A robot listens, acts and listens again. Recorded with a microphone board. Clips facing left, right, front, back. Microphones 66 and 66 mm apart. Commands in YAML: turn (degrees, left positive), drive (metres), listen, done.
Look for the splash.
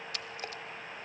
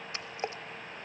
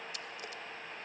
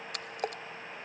turn: -155
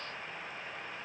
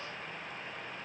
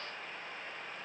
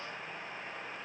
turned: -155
done: "I heard a splash from this way, but can't make it out now."